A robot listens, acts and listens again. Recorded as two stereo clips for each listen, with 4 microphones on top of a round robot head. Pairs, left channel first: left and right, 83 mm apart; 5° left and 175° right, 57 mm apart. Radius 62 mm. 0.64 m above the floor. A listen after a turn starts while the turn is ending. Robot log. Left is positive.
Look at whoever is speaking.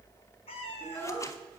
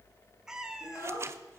note: The child speaking: 30° left.
cmd yaw +30
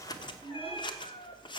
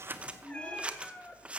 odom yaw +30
end: Found it: a child speaking, straight ahead.